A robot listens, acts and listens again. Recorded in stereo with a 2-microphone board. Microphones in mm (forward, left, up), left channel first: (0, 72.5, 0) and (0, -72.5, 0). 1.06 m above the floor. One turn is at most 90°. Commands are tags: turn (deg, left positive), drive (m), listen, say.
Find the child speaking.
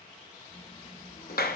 <turn deg="65"/>
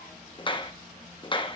<say>Facing the child speaking, over 4 m away.</say>